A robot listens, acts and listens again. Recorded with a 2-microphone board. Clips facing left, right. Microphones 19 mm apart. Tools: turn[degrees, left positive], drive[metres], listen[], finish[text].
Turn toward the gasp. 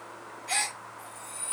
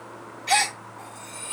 Thought: The gasp: about 70° right or 110° right.
Action: turn[-70]
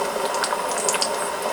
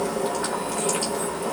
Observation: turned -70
Action: listen[]
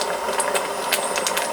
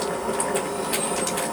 Action: finish[I heard a gasp, but can't make it out now. It was about straight ahead or 40° right.]